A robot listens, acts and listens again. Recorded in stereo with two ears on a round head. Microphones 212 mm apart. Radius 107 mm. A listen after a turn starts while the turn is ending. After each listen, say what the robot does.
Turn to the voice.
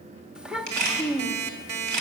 Turn 30° right.
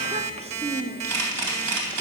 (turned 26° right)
Turn 150° right.
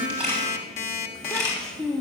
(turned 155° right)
Facing the child speaking, under 1 m away.